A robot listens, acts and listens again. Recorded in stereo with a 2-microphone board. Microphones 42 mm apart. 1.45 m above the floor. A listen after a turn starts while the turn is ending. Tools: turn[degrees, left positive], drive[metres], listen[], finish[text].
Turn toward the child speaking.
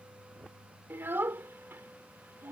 Thought: The child speaking: about 70° right or 110° right.
Action: turn[-70]
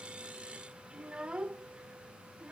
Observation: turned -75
Thought: So it is at 25° right.
Action: turn[-25]
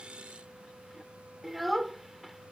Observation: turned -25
Action: finish[Facing the child speaking.]